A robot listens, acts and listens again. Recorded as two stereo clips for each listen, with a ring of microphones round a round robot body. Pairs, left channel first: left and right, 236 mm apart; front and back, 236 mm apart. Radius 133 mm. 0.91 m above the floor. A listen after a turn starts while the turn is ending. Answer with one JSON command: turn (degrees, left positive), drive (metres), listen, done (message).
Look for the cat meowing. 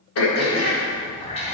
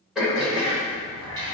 {"turn": 155}
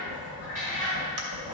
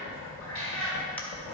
{"turn": -25}
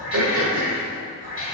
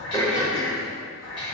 {"turn": -20}
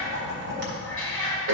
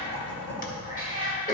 {"done": "Facing the cat meowing."}